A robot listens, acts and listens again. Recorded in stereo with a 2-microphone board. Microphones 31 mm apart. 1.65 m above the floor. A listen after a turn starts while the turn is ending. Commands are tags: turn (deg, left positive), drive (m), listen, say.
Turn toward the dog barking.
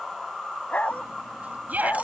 <turn deg="50"/>
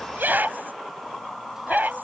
<say>Found it: a dog barking, straight ahead.</say>